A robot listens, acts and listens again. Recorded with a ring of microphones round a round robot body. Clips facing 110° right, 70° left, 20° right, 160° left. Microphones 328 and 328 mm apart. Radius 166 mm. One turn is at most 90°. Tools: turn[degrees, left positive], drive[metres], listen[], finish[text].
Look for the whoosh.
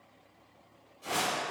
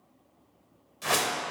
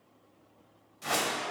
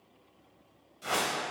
Thought: The whoosh: 55° left.
Action: turn[55]
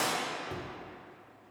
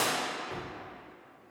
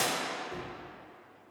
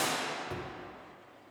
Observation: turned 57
Action: finish[Facing the whoosh, under 1 m away.]